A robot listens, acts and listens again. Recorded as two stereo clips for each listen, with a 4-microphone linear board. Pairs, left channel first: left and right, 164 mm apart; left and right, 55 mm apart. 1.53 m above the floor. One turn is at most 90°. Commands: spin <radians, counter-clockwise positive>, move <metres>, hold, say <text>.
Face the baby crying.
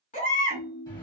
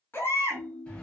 spin 0.87
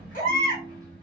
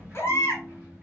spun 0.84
spin 1.22
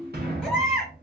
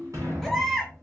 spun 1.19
say Found it: a baby crying, straight ahead, 1 to 2 m away.